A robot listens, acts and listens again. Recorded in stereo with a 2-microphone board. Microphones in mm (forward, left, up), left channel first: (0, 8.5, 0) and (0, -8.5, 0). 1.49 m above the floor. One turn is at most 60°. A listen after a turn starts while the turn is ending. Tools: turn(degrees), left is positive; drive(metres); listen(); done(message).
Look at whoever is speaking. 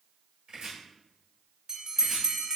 listen()
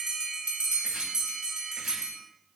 listen()
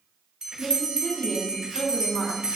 turn(degrees=60)
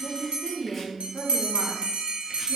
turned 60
turn(degrees=30)
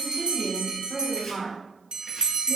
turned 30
turn(degrees=10)
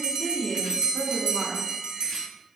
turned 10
done("Found it: a woman speaking, straight ahead.")